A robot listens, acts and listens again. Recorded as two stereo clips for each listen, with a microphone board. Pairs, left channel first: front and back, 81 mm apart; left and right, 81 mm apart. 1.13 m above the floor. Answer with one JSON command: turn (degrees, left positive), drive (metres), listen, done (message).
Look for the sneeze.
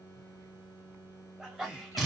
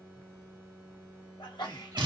{"turn": 100}
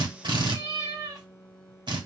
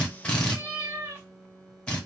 {"done": "I heard a sneeze from this way, but can't make it out now."}